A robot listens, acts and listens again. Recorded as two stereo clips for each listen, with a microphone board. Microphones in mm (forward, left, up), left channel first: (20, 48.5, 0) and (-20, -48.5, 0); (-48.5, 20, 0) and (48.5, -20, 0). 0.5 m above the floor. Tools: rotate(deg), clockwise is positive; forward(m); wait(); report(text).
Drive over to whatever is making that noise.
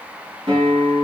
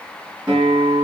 rotate(80)
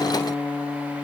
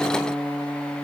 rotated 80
forward(1.0)
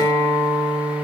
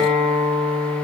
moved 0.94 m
forward(1.0)
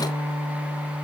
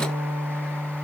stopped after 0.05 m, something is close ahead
report("I am next to the guitar.")